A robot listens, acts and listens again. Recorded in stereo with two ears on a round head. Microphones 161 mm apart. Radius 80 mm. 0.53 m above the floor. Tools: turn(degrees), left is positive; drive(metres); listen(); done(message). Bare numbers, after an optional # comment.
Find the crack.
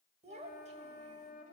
listen()
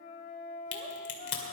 # The crack: about 45° left or 135° left.
turn(45)
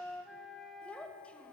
listen()
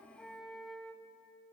done("I heard a crack, but can't make it out now. It was about straight ahead or 90° left.")